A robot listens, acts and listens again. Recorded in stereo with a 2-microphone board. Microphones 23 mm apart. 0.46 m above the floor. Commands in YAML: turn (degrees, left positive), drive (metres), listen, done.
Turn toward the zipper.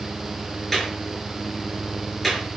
listen: true
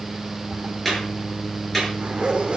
turn: -45
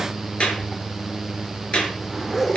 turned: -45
done: "Facing the zipper, over 4 m away."